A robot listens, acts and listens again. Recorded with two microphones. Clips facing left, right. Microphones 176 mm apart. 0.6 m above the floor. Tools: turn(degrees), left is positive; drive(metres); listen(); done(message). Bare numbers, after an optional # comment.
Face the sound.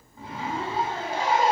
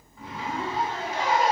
# The zipper: about 30° left or 150° left.
turn(30)
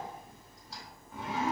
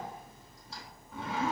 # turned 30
done("Found it: a zipper, straight ahead, 1 to 2 m away.")